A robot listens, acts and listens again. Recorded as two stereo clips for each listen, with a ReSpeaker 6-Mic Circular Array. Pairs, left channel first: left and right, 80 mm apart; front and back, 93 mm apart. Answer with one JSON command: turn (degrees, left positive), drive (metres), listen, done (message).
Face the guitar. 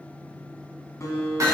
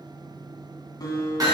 {"turn": 40}
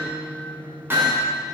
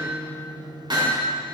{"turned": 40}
{"listen": true}
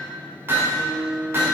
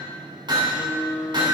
{"turn": 30}
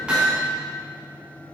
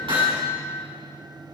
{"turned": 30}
{"listen": true}
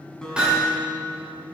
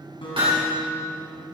{"turn": 10}
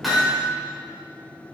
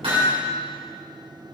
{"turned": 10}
{"listen": true}
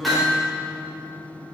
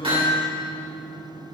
{"done": "Found it: a guitar, straight ahead, 2 to 4 m away."}